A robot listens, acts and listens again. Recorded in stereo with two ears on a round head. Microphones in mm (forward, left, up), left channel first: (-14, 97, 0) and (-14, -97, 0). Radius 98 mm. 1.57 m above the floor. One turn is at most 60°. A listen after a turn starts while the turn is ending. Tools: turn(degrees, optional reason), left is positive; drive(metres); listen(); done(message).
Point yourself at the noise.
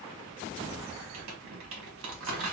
turn(degrees=-60, reason="The crumpling: about 65° right or 115° right.")
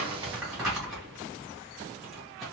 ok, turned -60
done("Facing the crumpling, 1 to 2 m away.")